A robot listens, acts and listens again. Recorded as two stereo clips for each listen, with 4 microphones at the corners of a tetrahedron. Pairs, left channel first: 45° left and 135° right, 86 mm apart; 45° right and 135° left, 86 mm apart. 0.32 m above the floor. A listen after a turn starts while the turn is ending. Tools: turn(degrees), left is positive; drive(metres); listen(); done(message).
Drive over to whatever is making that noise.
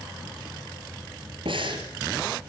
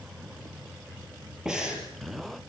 turn(degrees=-145)
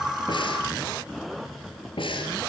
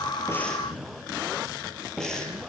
turn(degrees=40)
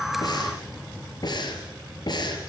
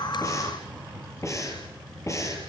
turn(degrees=10)
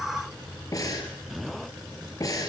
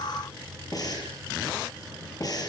drive(metres=1.0)
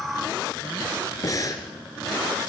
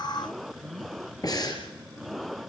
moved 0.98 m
drive(metres=1.0)
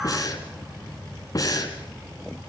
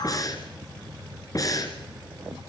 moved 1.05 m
drive(metres=1.0)
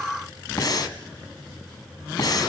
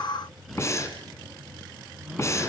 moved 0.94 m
drive(metres=1.0)
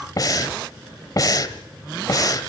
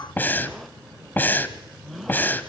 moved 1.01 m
turn(degrees=15)
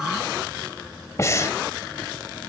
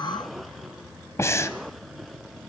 drive(metres=1.0)
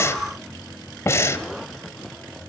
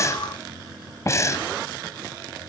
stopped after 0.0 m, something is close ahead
done("Arrived at the breathing, straight ahead.")